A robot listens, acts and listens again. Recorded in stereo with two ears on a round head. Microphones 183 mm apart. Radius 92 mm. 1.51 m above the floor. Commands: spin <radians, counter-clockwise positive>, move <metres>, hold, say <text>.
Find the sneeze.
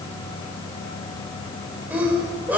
spin -0.52
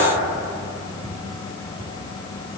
hold
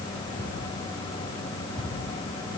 say I heard a sneeze, but can't make it out now. It was about 20° left or 140° right.